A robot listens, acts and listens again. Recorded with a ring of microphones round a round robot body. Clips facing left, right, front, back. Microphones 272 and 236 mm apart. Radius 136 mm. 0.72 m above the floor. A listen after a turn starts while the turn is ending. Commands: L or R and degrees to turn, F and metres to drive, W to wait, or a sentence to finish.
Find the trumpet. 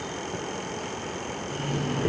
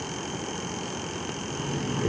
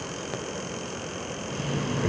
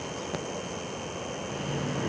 W
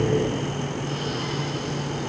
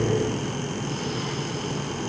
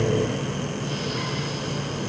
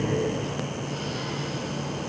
W
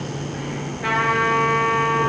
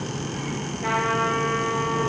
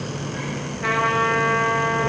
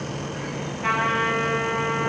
L25
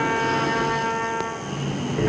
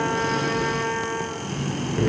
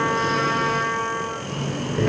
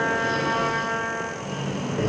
R15
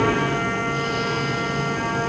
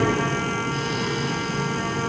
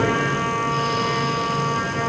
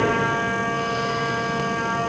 W
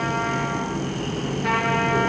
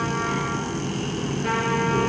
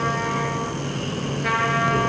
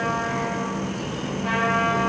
Found it: a trumpet, straight ahead.